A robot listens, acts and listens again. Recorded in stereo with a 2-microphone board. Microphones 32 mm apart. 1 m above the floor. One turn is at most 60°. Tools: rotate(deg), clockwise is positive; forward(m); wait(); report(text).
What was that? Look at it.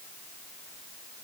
wait()
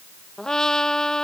rotate(-20)
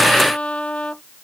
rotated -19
rotate(-60)
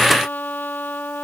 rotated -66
rotate(-60)
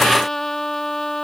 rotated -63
rotate(-15)
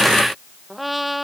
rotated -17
report("Facing the trumpet.")